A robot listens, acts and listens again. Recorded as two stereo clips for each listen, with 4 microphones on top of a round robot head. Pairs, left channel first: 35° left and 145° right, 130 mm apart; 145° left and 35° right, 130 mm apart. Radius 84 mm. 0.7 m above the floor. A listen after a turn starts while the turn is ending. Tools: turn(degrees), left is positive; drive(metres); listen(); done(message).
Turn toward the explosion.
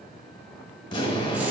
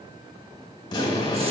turn(degrees=85)
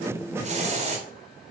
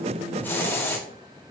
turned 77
turn(degrees=10)
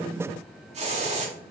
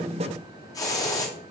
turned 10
done("Facing where the explosion came from. I can't hear it now.")